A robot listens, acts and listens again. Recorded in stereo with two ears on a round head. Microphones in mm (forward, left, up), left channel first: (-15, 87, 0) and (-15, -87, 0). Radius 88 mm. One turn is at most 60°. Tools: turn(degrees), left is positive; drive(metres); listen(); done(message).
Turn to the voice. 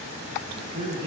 turn(degrees=-30)
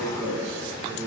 done("Facing the man speaking.")